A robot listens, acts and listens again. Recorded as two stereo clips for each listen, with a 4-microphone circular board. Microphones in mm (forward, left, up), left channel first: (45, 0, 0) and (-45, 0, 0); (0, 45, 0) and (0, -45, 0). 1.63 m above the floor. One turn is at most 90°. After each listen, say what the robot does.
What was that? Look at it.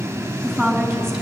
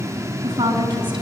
Turn 85° right.
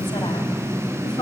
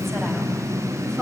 Keep listening.
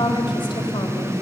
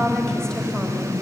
Turn 10° left.
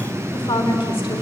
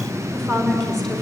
Found it: a woman speaking, straight ahead.